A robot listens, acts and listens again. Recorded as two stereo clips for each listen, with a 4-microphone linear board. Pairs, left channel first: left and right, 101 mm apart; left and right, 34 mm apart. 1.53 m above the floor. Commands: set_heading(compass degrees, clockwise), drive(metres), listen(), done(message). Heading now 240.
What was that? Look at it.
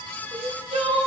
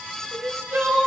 set_heading(330)
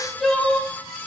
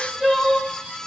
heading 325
done("Found it: crying, straight ahead, under 1 m away.")